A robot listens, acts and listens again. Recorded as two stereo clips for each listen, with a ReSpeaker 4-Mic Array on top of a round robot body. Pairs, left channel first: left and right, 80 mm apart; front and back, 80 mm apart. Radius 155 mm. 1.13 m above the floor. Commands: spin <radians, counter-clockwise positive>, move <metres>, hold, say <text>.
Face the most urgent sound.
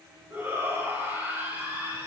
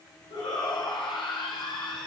spin -0.44
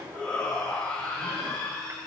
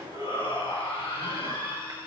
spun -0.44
spin 0.17
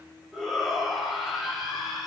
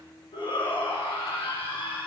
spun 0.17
say Found it: a shout, straight ahead, 2 to 4 m away.